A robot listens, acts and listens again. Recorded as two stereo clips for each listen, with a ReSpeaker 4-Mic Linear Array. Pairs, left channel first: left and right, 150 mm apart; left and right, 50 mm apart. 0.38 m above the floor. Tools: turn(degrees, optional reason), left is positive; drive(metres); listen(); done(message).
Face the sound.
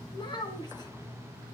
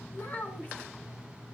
turn(degrees=30, reason="The child speaking: about 30° left or 150° left.")
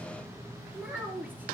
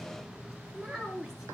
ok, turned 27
turn(degrees=-10, reason="So it is at 10° right.")
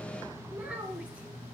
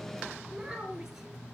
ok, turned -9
turn(degrees=-10, reason="The child speaking is now 10° right.")
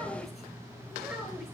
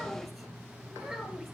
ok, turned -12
done("Facing the child speaking.")